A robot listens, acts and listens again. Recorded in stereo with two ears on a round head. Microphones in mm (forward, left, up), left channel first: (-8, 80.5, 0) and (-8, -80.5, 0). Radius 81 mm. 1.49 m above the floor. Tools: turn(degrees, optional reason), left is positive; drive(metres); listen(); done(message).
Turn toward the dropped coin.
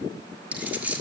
turn(degrees=-30)
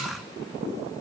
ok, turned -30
listen()
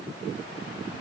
done("I heard a dropped coin, but can't make it out now. It was about 20° left or 140° right.")